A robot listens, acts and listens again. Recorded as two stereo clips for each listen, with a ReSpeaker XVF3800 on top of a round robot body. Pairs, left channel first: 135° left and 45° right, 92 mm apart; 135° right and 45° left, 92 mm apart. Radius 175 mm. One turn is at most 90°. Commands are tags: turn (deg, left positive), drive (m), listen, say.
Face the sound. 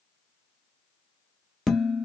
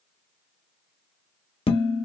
<turn deg="-90"/>
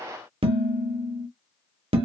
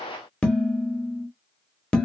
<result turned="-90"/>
<turn deg="-55"/>
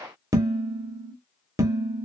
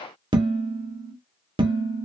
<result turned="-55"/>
<turn deg="10"/>
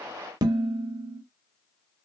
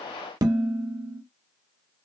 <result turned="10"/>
<say>Found it: dishes clattering, straight ahead, 1 to 2 m away.</say>